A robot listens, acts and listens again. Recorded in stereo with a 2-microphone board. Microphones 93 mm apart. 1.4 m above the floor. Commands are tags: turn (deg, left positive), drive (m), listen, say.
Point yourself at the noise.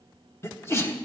<turn deg="25"/>
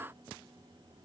<listen/>
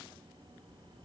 <say>I heard a sneeze, but can't make it out now. It was about straight ahead or 130° left.</say>